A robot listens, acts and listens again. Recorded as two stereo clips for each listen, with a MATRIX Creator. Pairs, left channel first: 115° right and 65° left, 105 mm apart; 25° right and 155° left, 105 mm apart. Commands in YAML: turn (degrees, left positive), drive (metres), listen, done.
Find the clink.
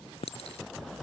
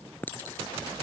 turn: -95
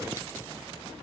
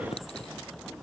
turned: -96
listen: true
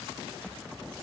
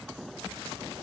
listen: true
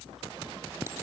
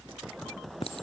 done: "Facing where the clink came from. I can't hear it now."